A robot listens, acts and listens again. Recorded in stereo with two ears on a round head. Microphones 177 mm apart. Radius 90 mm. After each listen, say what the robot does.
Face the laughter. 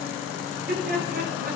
Turn 50° right.
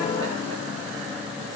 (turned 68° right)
Keep listening.
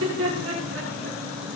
Turn 70° right.
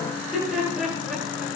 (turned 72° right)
Facing the laughter, over 4 m away.